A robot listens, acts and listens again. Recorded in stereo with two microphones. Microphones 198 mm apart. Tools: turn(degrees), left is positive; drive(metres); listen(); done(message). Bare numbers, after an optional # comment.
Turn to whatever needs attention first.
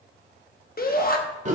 # The shout: about 45° left or 135° left.
turn(45)
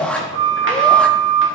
done("Facing the shout.")